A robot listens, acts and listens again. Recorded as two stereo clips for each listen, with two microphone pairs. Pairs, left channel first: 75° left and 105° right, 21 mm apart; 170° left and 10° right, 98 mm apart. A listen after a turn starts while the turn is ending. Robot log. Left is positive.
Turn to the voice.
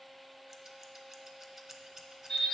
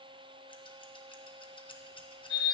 cmd idle
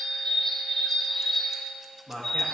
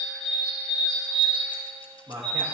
note: The man speaking: 55° right.
cmd yaw -55
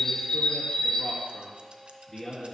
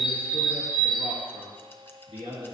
end: Found it: a man speaking, straight ahead.